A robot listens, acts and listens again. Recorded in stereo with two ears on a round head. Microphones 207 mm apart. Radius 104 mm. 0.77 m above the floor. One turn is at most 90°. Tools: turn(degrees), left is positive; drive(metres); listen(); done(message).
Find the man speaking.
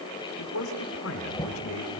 turn(degrees=70)
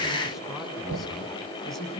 done("Found it: a man speaking, straight ahead.")